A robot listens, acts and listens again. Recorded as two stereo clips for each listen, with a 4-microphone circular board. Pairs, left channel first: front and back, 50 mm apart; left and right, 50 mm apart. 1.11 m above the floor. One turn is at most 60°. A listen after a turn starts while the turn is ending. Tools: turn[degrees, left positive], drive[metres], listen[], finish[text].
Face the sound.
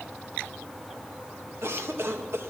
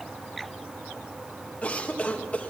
Thought: The cough: 150° left.
Action: turn[60]
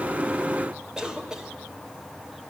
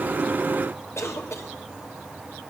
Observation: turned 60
Thought: The cough is now 105° left.
Action: turn[60]
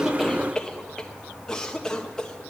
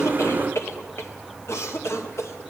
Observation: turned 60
Thought: The cough is now 75° left.
Action: turn[60]
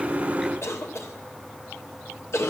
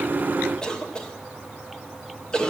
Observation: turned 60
Thought: The cough is now 15° left.
Action: turn[15]
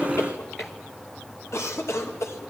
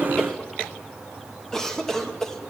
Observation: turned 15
Thought: The cough is now 10° left.
Action: turn[10]
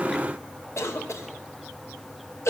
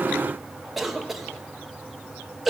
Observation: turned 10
Action: finish[Facing the cough, 1 to 2 m away.]